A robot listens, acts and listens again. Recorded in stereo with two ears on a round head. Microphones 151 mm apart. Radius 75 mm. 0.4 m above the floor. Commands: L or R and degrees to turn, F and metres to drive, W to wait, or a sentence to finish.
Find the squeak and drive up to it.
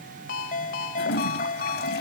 W
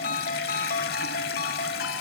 W
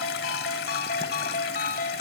I can't make out a squeak to turn to.